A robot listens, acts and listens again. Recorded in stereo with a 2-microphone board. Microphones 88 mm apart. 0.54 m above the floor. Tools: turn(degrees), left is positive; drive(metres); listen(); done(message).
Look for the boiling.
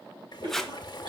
turn(degrees=50)
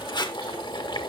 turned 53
turn(degrees=75)
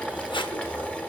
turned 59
turn(degrees=15)
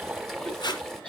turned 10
done("Facing the boiling, 1 to 2 m away.")